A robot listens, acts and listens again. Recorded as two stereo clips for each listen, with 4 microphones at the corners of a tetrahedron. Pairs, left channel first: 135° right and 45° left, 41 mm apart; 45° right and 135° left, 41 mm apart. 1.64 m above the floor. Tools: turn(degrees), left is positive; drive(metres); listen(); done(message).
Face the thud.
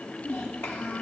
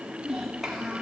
listen()
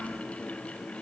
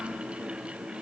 listen()
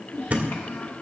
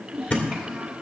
done("Facing the thud.")